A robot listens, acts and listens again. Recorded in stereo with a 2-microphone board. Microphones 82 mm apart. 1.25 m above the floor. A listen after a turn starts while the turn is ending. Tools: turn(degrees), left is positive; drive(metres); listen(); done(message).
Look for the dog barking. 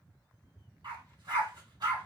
turn(degrees=-65)
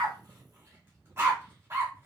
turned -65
turn(degrees=-35)
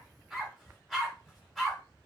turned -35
done("Found it: a dog barking, straight ahead.")